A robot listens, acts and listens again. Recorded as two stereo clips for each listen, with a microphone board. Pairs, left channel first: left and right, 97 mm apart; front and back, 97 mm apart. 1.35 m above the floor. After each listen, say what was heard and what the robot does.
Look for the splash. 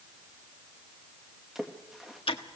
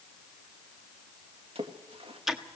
The splash: 175° right. Turn 175° right.
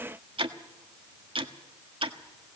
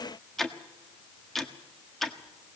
I heard a splash from this way, but can't make it out now.